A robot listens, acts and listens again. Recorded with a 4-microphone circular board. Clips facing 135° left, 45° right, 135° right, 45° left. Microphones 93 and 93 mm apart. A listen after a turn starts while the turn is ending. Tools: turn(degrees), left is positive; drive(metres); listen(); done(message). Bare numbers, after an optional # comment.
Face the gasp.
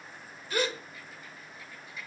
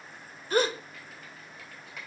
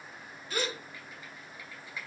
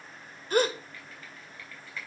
done("Facing the gasp.")